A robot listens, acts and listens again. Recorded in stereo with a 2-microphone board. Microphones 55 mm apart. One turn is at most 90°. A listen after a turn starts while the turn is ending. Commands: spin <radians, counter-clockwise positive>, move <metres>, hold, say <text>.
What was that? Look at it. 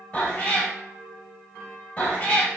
spin 0.44
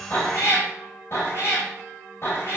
spin 1.57
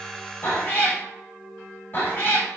spin 0.61
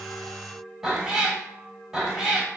spin -0.17
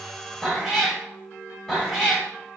say Facing the cat meowing, under 1 m away.